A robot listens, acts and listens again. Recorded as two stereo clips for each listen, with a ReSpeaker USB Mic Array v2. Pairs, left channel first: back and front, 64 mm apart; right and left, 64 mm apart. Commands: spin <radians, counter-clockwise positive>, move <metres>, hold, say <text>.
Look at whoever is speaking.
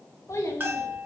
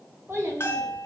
spin 2.44
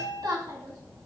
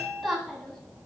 say Facing the child speaking, 2 to 4 m away.